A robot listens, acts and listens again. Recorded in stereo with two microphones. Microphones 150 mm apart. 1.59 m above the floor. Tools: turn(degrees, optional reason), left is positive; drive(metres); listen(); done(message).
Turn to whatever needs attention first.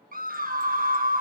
turn(degrees=-70, reason="The scream: about 70° right or 110° right.")
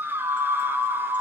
turn(degrees=-15, reason="So it is at 15° right.")
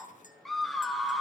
done("Found it: a scream, straight ahead.")